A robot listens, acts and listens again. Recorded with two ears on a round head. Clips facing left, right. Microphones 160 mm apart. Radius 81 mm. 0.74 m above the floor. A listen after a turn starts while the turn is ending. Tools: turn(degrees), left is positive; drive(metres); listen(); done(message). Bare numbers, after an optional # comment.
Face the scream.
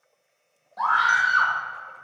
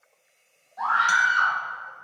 # The scream: about 65° left or 115° left.
turn(65)
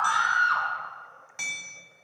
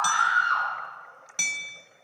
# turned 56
# So it is at 60° left.
turn(60)
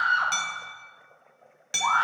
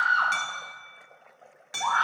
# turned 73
# The scream is now 15° right.
turn(-15)
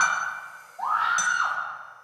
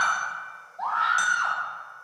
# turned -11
done("Facing the scream.")